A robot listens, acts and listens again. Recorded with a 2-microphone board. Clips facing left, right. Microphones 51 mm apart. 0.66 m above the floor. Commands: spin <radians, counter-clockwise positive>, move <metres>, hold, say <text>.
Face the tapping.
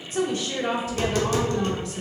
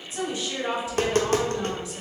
spin -0.87
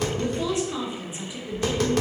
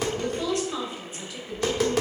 say Facing the tapping, under 1 m away.